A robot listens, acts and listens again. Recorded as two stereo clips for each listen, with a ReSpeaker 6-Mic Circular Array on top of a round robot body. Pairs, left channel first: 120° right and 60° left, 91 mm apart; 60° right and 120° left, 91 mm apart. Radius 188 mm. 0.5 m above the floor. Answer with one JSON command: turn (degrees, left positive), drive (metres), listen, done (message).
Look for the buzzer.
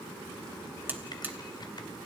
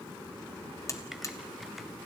{"done": "Found it: a buzzer, straight ahead, 1 to 2 m away."}